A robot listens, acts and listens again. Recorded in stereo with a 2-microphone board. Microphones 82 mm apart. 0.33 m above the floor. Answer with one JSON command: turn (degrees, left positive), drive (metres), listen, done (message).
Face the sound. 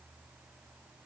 {"listen": true}
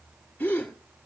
{"turn": 20}
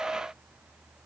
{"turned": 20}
{"listen": true}
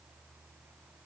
{"done": "I heard a gasp, but can't make it out now. It was about straight ahead or 140° left."}